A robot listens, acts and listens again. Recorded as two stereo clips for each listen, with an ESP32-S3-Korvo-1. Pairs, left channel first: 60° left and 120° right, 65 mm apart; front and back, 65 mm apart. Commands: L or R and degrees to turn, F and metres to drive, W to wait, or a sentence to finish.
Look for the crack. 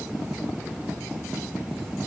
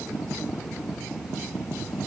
W
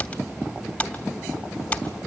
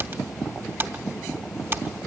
W
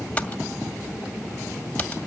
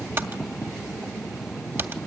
I can't make out a crack to turn to.